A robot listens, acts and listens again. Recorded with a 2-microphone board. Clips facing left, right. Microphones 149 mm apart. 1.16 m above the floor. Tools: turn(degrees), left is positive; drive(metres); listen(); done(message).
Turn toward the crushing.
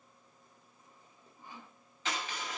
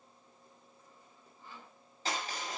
turn(degrees=-35)
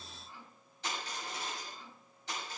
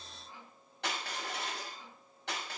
turn(degrees=-110)
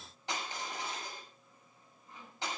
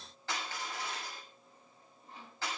turn(degrees=20)
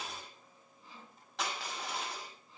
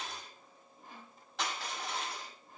done("Facing the crushing, over 4 m away.")